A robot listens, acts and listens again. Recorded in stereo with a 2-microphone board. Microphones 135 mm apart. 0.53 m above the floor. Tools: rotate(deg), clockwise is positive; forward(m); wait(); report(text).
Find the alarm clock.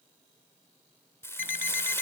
rotate(-90)
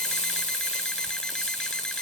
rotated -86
wait()
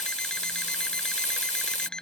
report("Facing the alarm clock.")